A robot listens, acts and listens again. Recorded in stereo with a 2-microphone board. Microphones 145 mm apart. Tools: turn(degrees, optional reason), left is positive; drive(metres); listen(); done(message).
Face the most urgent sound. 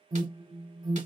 turn(degrees=-30, reason="The alarm: about 30° right or 150° right.")
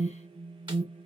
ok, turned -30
turn(degrees=-125, reason="So it is at 125° right.")
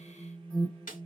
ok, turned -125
turn(degrees=10, reason="The alarm is now 10° left.")
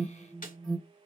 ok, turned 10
done("Facing the alarm, 1 to 2 m away.")